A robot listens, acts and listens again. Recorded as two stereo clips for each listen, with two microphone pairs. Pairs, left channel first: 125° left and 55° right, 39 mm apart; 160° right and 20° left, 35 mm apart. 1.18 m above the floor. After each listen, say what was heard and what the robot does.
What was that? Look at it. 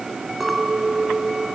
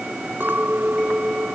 The clink: 35° left. Turn 35° left.
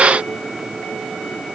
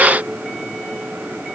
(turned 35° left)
Keep listening.
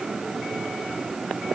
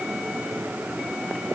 Keep listening.
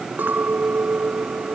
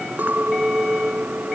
The clink is now 15° right. Turn 15° right.
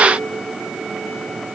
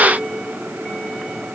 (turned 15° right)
Keep listening.
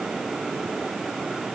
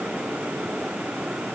Keep listening.
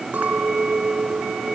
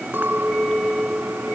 Found it: a clink, straight ahead.